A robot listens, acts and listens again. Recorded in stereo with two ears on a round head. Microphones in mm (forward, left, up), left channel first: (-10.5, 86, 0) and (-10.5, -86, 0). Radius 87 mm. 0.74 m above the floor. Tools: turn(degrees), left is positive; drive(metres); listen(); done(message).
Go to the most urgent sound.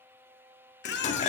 turn(degrees=60)
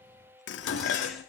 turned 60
listen()
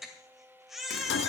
drive(metres=1.0)
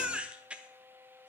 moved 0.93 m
drive(metres=1.0)
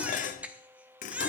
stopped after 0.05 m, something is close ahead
turn(degrees=-10)
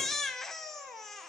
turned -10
done("Arrived at the baby crying, straight ahead.")